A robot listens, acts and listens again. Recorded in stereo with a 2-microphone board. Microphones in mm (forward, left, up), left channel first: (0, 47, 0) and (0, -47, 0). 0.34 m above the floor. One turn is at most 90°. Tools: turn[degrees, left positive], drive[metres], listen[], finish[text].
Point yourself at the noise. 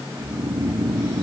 Thought: The snoring: about 70° right or 110° right.
Action: turn[-70]
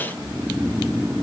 Action: finish[Found it: snoring, straight ahead.]